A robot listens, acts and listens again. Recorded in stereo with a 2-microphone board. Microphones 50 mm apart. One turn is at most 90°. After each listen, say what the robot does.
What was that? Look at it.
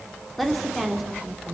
Turn 30° right.
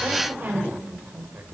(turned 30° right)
Turn 90° right.
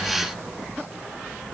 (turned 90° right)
Turn 55° right.
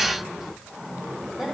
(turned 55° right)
Keep listening.
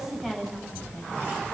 Facing the woman speaking, over 4 m away.